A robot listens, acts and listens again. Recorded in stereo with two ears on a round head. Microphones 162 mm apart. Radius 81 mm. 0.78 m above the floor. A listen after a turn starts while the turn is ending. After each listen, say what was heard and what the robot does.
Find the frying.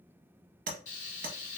The frying: about 45° left or 135° left. Turn 45° left.
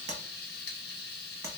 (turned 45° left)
So it is at 80° left. Turn 80° left.
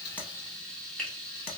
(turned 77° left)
Facing the frying, 1 to 2 m away.